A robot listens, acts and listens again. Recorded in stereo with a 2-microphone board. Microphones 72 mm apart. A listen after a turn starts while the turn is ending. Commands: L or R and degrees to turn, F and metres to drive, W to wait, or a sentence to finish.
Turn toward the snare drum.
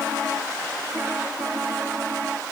W
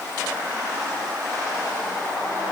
W
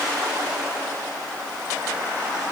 I can't make out a snare drum.